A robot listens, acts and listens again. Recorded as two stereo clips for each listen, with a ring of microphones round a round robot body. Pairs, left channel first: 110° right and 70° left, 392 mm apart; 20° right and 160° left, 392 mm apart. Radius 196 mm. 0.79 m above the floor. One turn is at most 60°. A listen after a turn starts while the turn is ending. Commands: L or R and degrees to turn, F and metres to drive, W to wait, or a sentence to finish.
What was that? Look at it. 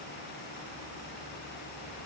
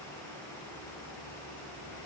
W
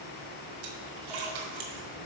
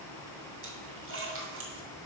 L60
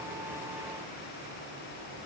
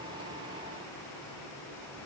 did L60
L40
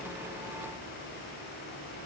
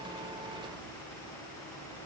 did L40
Facing where the splash came from. I can't hear it now.